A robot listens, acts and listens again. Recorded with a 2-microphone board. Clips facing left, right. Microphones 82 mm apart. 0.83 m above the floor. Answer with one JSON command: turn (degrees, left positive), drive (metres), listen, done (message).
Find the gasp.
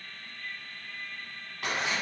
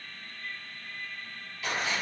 {"listen": true}
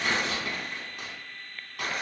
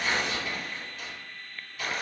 {"listen": true}
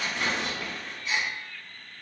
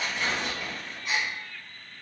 {"turn": -55}
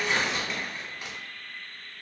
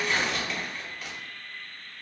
{"listen": true}
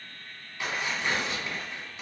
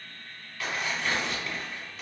{"done": "I heard a gasp, but can't make it out now. It was about straight ahead or 70° right."}